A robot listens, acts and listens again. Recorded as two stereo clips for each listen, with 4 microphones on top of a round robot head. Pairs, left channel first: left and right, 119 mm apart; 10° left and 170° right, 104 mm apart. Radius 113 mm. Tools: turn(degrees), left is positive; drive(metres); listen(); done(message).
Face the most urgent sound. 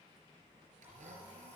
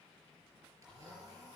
listen()
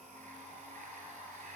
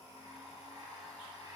listen()
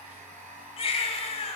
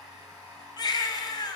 turn(degrees=60)
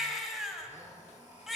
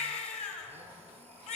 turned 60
done("Facing the baby crying.")